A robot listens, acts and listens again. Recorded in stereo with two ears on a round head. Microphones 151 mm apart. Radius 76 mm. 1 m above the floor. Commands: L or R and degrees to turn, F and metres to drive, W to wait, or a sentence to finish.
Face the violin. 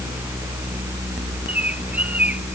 W
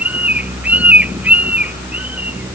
W
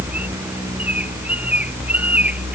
I can't make out a violin to turn to.